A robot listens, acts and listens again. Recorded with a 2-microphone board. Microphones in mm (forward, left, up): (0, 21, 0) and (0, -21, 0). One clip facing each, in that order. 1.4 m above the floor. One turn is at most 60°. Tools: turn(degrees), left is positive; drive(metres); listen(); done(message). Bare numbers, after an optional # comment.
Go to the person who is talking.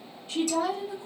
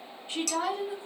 # The woman speaking: about 25° right or 155° right.
turn(-25)
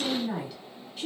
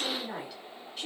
drive(1.0)
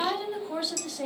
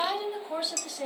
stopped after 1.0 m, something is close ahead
done("I am next to the woman speaking.")